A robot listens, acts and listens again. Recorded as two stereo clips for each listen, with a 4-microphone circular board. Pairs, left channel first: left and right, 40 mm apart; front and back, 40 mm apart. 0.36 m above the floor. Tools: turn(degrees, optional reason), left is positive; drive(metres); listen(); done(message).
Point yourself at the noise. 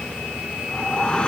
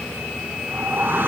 turn(degrees=155, reason="The whoosh: 155° left.")
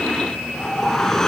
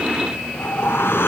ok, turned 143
turn(degrees=10, reason="The whoosh is now 10° left.")
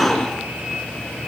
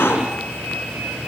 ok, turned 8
done("Found it: a whoosh, straight ahead.")